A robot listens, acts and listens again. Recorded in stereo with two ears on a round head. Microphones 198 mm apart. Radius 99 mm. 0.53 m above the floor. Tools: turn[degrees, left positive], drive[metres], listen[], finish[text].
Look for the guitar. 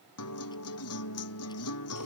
Thought: The guitar: about 70° left or 110° left.
Action: turn[70]
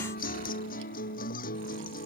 Thought: So it is at 35° left.
Action: turn[35]
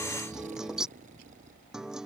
Action: finish[Facing the guitar.]